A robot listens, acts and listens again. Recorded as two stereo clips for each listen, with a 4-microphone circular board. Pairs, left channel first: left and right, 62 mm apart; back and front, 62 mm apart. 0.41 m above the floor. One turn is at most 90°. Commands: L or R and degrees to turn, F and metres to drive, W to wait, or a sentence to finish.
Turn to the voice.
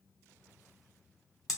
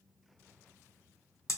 W
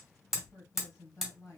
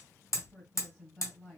L90
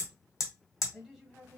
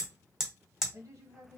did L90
Found it: a woman speaking, straight ahead.